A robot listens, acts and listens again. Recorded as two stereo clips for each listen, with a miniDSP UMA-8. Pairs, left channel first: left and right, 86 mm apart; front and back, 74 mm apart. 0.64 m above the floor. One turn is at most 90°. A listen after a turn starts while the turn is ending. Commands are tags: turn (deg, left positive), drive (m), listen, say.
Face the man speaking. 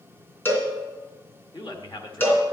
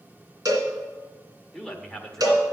<turn deg="85"/>
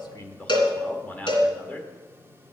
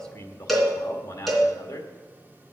<turn deg="20"/>
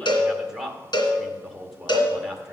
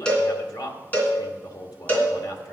<say>Facing the man speaking.</say>